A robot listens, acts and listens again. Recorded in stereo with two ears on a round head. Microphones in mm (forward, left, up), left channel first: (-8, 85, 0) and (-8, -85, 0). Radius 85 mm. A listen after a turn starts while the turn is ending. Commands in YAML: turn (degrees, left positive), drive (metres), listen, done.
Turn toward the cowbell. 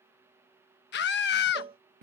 turn: -30
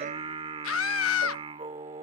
listen: true
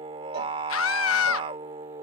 listen: true
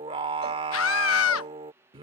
done: "I heard a cowbell, but can't make it out now. It was about straight ahead or 120° right."